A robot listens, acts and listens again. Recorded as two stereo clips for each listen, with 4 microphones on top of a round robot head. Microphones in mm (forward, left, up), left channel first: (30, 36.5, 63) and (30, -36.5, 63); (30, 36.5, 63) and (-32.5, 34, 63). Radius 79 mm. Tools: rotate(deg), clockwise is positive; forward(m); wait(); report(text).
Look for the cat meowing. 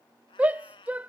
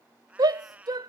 rotate(-115)
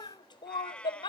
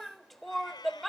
rotate(-15)
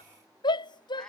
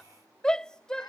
wait()
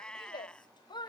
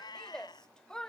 rotate(-15)
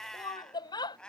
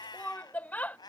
rotate(-10)
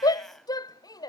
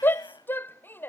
wait()
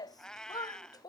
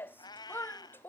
rotate(-10)
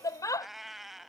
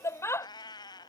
report("Found it: a cat meowing, straight ahead.")